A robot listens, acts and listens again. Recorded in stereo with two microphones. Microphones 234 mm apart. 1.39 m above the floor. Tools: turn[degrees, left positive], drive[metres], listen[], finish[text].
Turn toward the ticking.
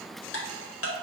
Action: turn[90]
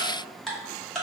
Action: finish[Found it: ticking, straight ahead, under 1 m away.]